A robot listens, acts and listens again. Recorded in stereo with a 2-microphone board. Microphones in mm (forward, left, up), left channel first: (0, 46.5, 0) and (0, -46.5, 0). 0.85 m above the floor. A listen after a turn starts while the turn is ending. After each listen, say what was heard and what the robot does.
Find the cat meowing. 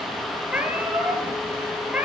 Turn 30° right.
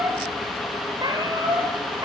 So it is at 135° right. Turn 135° right.
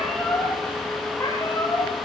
The cat meowing is now 25° left. Turn 25° left.
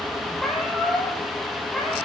Facing the cat meowing.